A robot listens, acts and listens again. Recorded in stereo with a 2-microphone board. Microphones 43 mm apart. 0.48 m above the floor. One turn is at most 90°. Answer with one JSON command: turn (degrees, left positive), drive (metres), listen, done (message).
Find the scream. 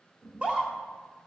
{"turn": -25}
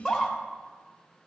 {"done": "Found it: a scream, straight ahead, 1 to 2 m away."}